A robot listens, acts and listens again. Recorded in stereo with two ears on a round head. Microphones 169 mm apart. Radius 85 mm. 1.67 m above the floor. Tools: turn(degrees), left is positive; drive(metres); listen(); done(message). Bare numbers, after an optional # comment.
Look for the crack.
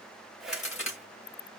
# The crack: about 35° left or 145° left.
turn(35)
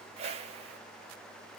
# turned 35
listen()
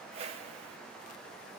done("I heard a crack, but can't make it out now. It was about straight ahead or 110° left.")